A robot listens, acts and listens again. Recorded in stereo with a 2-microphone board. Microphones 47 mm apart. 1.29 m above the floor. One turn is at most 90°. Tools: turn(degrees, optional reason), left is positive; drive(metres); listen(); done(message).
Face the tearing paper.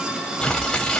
turn(degrees=20, reason="The tearing paper: about 20° left or 160° left.")
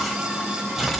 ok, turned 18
done("Facing the tearing paper, 1 to 2 m away.")